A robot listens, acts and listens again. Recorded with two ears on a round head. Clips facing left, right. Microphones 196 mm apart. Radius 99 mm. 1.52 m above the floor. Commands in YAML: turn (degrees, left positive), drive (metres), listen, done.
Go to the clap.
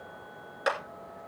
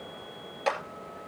turn: 15
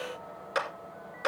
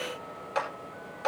turn: 150
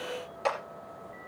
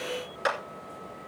turn: -20
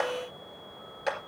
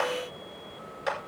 drive: 1.0
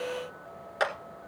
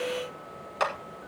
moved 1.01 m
drive: 1.0
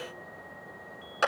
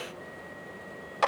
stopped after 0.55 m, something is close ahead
done: "I am next to the clap."